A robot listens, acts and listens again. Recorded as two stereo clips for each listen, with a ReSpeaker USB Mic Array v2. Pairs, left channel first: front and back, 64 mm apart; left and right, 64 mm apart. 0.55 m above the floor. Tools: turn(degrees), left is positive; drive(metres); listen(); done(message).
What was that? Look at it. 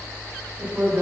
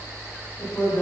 turn(degrees=115)
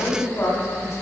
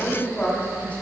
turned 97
turn(degrees=20)
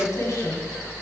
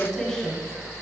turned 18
done("Found it: a woman speaking, straight ahead, 1 to 2 m away.")